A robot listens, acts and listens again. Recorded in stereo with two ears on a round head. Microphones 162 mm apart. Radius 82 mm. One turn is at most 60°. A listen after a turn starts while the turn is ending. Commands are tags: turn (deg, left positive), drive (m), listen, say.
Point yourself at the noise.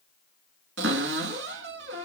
<turn deg="-60"/>
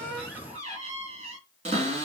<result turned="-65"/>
<turn deg="-35"/>
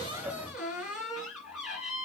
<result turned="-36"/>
<say>Found it: a cupboard door, straight ahead, 2 to 4 m away.</say>